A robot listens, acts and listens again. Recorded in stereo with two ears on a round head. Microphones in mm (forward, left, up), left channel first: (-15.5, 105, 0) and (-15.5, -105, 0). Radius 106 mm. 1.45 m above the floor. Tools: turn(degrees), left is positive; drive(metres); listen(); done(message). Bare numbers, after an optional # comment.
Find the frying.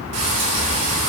# The frying: about 70° right or 110° right.
turn(-70)
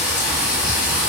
done("Facing the frying.")